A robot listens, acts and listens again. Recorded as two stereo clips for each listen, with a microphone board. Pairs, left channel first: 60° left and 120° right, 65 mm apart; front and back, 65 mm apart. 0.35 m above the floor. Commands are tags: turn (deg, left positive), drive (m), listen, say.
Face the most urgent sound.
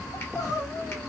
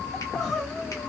<turn deg="85"/>
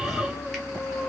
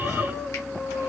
<turn deg="40"/>
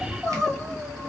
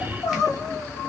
<turn deg="-25"/>
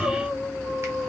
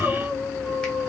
<say>Found it: crying, straight ahead, 1 to 2 m away.</say>